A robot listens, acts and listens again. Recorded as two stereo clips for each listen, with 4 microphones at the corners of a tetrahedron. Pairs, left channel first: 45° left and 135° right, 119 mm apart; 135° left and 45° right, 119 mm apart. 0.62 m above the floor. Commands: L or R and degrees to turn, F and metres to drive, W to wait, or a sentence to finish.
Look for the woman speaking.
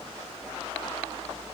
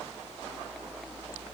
W
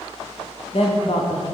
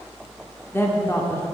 L70
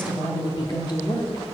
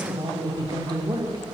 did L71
Found it: a woman speaking, straight ahead, 1 to 2 m away.